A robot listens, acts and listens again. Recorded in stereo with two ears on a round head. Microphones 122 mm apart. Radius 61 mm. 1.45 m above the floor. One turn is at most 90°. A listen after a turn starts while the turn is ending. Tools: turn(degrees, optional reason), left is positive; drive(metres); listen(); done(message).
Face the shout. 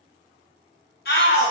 turn(degrees=90)
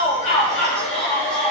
done("Facing the shout, 1 to 2 m away.")